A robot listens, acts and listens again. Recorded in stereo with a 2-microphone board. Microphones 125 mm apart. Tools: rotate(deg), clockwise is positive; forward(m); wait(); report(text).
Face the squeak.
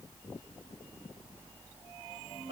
wait()
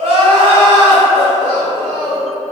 wait()
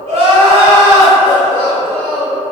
report("I can't make out a squeak to turn to.")